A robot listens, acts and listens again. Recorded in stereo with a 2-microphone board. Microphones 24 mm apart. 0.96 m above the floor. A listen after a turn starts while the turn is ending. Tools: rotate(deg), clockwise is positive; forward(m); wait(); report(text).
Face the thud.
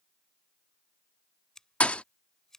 rotate(-55)
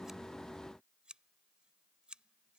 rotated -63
wait()
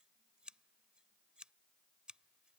report("I heard a thud, but can't make it out now. It was about 5° right or 60° left.")